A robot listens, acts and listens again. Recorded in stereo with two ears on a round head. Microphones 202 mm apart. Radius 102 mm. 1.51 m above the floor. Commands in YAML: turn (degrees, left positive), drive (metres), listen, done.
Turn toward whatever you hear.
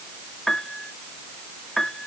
turn: 30
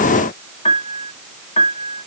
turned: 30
turn: 150
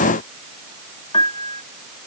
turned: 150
turn: 25
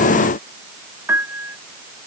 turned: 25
turn: -10
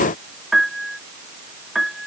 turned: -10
done: "Facing the piano."